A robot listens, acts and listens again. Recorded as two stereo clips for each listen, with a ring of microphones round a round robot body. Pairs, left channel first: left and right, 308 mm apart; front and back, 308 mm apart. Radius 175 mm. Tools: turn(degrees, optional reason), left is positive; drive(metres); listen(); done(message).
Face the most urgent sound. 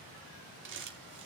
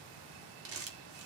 listen()
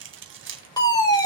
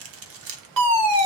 turn(degrees=165, reason="The fire alarm: 165° left.")
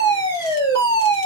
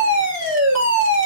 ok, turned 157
turn(degrees=10, reason="The fire alarm is now 10° left.")
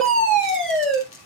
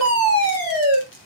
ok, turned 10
done("Found it: a fire alarm, straight ahead, over 4 m away.")